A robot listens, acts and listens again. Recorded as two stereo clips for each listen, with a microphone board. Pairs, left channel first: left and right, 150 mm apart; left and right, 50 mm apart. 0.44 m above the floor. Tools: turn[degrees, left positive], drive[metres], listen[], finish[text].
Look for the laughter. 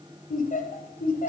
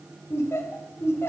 Thought: The laughter: about 65° left or 115° left.
Action: turn[65]
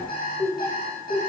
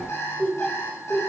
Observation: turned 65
Thought: So it is at 20° left.
Action: turn[20]
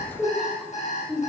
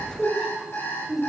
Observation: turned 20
Action: finish[Facing the laughter, 2 to 4 m away.]